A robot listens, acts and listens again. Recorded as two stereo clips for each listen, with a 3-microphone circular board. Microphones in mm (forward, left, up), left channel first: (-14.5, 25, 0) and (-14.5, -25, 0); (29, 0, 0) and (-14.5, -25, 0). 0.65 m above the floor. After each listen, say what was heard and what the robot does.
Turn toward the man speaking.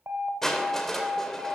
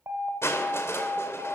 Keep listening.
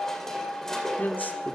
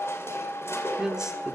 The man speaking: 125° left. Turn 125° left.
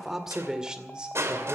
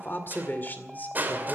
The man speaking is now 25° right. Turn 25° right.
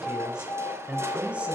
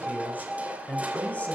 The man speaking is now 25° right. Turn 25° right.
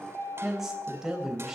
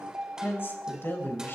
The man speaking is now 10° right. Turn 10° right.
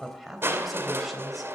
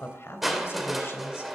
Facing the man speaking.